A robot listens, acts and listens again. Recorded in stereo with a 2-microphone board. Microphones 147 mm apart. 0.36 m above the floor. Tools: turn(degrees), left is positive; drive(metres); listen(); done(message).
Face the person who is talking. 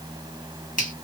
listen()
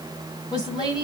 turn(degrees=30)
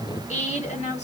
turn(degrees=115)
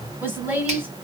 turn(degrees=-15)
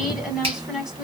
done("Found it: a woman speaking, straight ahead.")